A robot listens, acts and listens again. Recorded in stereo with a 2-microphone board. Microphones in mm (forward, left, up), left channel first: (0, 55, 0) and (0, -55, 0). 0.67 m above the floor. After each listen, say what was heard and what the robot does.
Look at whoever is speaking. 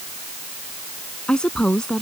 Turn 30° left.
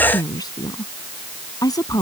So it is at 145° left. Turn 145° left.
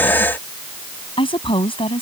The woman speaking is now 55° left. Turn 55° left.
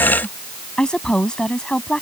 Found it: a woman speaking, straight ahead.